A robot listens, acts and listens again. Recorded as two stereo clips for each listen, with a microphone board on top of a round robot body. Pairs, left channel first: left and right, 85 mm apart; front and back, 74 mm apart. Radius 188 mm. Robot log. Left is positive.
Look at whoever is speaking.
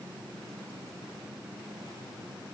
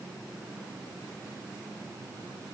cmd idle
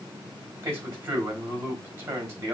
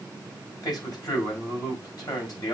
note: The man speaking: 30° right.
cmd yaw -30
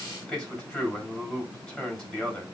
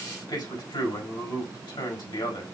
note: The man speaking is now 10° left.
cmd yaw +10
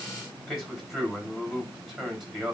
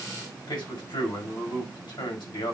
end: Found it: a man speaking, straight ahead, over 4 m away.